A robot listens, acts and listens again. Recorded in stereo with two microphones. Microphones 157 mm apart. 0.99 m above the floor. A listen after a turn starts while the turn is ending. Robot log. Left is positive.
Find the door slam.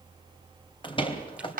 note: The door slam: about 35° left or 145° left.
cmd yaw +35
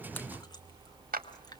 cmd idle
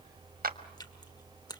end: I heard a door slam, but can't make it out now. It was about straight ahead or 110° left.